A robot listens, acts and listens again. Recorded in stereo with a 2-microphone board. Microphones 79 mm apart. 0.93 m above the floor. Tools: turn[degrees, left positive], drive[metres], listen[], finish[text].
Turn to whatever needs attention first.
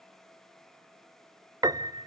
Action: listen[]
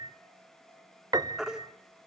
Action: turn[-30]
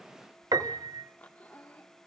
Action: listen[]
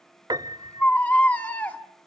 Thought: So it is at 20° left.
Action: turn[20]
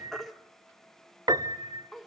Action: finish[Facing the baby crying, 1 to 2 m away.]